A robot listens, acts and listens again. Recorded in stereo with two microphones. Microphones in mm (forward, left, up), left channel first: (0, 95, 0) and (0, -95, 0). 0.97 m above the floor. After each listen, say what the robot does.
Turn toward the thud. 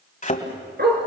Turn 45° left.
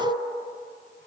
Keep listening.
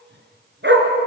I heard a thud, but can't make it out now. It was about straight ahead or 90° left.